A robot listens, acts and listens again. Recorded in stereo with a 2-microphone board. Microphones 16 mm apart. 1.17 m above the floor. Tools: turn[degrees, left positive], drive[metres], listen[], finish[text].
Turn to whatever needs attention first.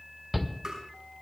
Action: turn[-30]
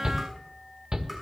Thought: So it is at 145° right.
Action: turn[-145]
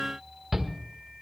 Thought: The shout is now 25° right.
Action: turn[-25]
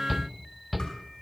Action: finish[Facing the shout.]